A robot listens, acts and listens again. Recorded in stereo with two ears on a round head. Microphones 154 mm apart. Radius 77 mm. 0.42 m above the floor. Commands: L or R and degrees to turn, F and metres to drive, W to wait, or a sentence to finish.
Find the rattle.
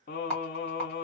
L30
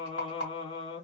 L145
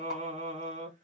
W
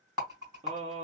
R25
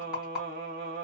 Found it: a rattle, straight ahead.